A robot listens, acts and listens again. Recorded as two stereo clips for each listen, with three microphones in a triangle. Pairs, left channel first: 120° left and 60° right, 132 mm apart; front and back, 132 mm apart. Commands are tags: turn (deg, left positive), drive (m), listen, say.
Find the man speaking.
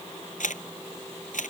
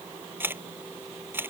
<listen/>
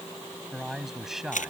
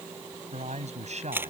<turn deg="-145"/>
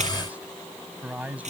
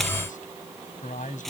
<turn deg="20"/>
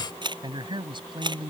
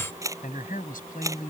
<say>Facing the man speaking.</say>